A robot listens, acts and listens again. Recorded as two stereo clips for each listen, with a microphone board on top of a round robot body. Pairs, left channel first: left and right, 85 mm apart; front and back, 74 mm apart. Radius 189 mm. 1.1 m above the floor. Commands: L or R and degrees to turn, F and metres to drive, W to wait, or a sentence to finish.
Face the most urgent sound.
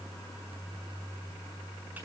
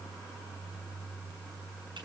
W
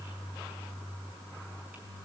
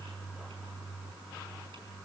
W
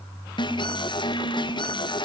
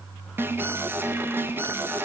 L120
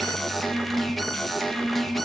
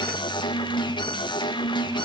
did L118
Facing the alarm.